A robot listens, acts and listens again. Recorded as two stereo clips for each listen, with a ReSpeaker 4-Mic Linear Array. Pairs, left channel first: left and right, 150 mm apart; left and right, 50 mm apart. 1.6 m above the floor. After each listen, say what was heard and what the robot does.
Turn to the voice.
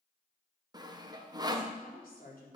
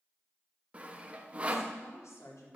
Turn 90° left.
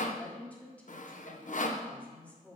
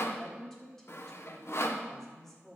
So it is at 10° left. Turn 10° left.
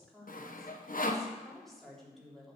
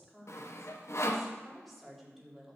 Facing the woman speaking.